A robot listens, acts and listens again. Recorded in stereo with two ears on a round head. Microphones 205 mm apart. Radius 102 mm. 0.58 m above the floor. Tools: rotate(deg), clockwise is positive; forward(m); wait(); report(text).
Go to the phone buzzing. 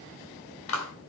wait()
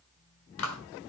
wait()
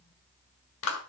report("I can't make out a phone buzzing to turn to.")